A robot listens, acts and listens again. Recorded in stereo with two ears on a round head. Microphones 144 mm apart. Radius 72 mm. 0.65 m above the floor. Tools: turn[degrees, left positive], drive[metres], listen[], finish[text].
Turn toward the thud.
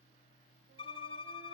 Action: listen[]
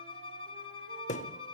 Thought: The thud: about 50° left or 130° left.
Action: turn[50]
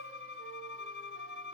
Action: listen[]
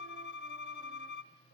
Action: finish[I heard a thud, but can't make it out now. It was about straight ahead or 80° left.]